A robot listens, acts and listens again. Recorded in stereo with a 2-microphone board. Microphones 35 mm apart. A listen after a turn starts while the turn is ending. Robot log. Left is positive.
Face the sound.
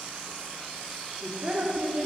note: The woman speaking: about 40° right or 140° right.
cmd yaw -40
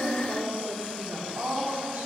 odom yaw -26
note: So it is at 110° right.
cmd yaw -110
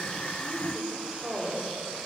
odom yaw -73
note: The woman speaking is now 40° right.
cmd yaw -40
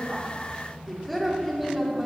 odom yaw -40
end: Facing the woman speaking.